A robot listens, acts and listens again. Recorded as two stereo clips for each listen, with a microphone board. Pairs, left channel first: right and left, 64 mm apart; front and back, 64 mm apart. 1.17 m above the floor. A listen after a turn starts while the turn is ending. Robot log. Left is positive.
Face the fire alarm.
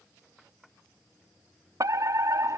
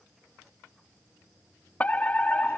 note: The fire alarm: 65° left.
cmd yaw +65
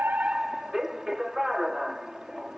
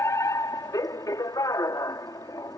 note: The fire alarm is now 10° left.
cmd yaw +10
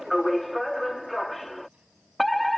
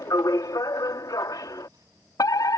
end: Facing the fire alarm.